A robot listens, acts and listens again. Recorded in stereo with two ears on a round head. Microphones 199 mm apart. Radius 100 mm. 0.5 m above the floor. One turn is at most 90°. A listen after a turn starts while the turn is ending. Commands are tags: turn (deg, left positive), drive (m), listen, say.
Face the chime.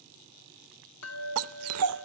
<turn deg="75"/>
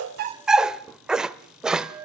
<say>Found it: a chime, straight ahead.</say>